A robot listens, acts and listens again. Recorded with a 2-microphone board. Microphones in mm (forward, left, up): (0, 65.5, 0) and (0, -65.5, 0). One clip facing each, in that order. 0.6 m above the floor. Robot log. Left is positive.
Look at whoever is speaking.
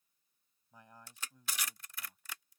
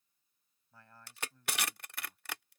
cmd yaw +30
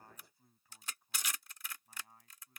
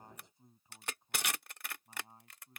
note: So it is at 25° right.
cmd yaw -25
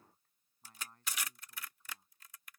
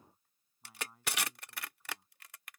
note: The man speaking is now 10° right.
cmd yaw -10
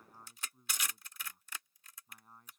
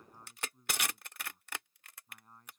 end: Found it: a man speaking, straight ahead.